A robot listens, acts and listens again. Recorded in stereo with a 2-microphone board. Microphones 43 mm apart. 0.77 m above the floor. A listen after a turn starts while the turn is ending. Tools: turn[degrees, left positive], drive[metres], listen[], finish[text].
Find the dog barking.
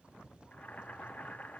Action: listen[]
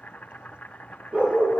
Thought: The dog barking: about 35° right or 145° right.
Action: turn[-35]
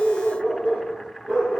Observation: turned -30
Action: finish[Found it: a dog barking, straight ahead.]